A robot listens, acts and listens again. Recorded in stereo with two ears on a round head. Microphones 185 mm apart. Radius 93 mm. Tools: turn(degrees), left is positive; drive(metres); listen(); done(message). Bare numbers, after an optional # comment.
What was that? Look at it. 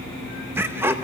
turn(-30)
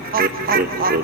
# So it is at 135° right.
turn(-135)
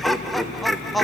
done("Found it: laughter, straight ahead.")